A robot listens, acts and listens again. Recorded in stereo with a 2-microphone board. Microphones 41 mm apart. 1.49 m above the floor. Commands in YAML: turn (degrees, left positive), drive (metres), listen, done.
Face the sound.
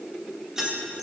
turn: -20
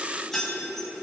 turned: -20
done: "Found it: keys jangling, straight ahead."